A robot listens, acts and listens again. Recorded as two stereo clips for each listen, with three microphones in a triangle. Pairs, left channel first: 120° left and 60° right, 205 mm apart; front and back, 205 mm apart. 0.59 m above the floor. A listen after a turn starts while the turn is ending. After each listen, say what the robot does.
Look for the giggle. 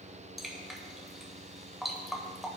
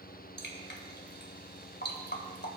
Keep listening.
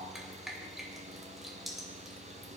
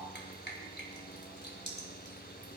Keep listening.
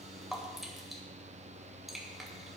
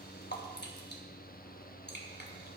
I can't make out a giggle to turn to.